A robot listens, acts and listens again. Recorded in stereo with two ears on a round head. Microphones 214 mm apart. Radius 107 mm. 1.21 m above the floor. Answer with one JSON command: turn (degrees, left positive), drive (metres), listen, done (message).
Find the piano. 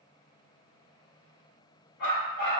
{"listen": true}
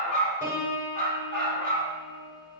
{"turn": 30}
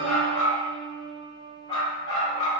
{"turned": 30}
{"turn": 150}
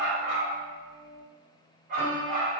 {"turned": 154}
{"done": "Facing the piano, 2 to 4 m away."}